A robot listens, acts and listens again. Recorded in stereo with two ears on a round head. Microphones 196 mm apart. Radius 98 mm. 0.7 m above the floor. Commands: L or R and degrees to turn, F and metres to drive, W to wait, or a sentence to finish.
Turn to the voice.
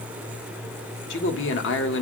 L60
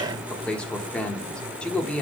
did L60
Facing the man speaking.